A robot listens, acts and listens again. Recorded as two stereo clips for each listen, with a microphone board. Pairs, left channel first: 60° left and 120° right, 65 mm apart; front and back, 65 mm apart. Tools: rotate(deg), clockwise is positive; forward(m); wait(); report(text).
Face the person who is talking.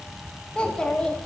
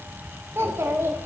rotate(-135)
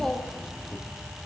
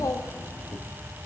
rotate(25)
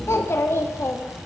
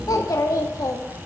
rotate(-15)
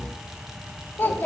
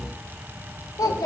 report("Found it: a child speaking, straight ahead.")